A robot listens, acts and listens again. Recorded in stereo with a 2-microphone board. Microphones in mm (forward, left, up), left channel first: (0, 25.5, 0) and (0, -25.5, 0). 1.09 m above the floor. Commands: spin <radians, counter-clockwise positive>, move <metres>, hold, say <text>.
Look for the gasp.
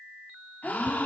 spin 0.61
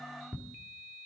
hold
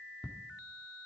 say I heard a gasp, but can't make it out now. It was about straight ahead or 110° left.